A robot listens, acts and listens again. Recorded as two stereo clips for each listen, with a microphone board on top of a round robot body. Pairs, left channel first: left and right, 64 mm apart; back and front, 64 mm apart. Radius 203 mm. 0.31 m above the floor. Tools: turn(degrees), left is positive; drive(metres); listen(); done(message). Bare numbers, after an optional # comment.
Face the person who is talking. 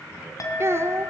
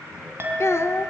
# The child speaking: 135° right.
turn(-135)
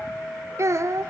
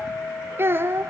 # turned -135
# The child speaking is now 50° right.
turn(-50)
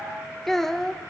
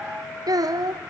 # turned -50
done("Found it: a child speaking, straight ahead.")